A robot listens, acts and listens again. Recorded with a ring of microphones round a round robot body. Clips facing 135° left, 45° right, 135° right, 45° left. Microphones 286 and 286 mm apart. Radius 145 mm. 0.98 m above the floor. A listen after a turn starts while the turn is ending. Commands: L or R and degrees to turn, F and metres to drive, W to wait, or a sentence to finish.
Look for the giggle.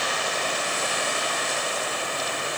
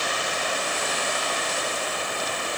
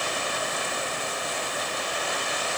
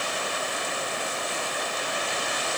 W
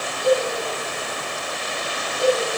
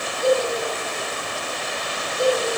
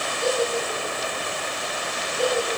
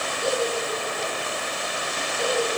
R85
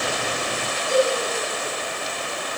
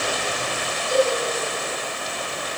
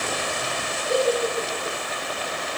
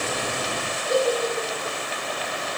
R45
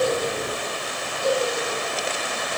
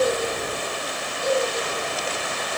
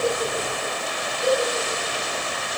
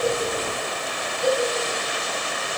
R25
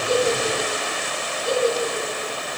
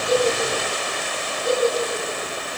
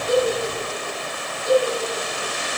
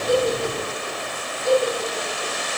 Facing the giggle, over 4 m away.